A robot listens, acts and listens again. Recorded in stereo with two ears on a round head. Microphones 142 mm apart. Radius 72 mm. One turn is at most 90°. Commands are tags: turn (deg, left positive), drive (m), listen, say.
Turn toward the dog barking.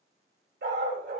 <turn deg="-60"/>
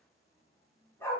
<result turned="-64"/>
<turn deg="15"/>
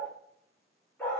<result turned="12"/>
<turn deg="10"/>
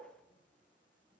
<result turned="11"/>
<listen/>
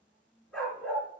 <say>Facing the dog barking, over 4 m away.</say>